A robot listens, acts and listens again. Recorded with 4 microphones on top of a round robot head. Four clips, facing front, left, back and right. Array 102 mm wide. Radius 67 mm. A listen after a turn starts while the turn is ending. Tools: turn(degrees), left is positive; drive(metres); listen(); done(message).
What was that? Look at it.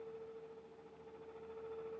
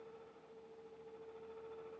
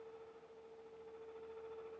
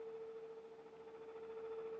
listen()
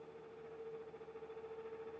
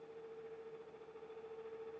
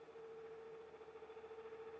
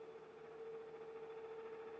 listen()
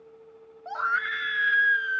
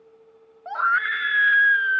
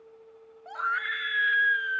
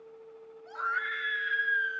turn(degrees=70)
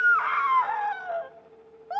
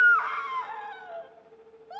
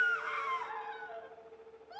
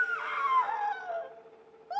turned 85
turn(degrees=-15)
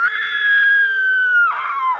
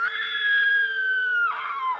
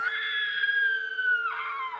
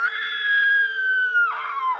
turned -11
done("Found it: a scream, straight ahead.")